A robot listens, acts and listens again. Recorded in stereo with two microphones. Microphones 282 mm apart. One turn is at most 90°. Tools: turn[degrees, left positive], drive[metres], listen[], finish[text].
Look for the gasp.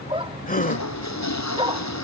Thought: The gasp: about 30° left or 150° left.
Action: turn[30]
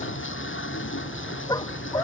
Action: listen[]
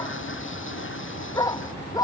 Action: finish[I heard a gasp, but can't make it out now. It was about straight ahead or 120° left.]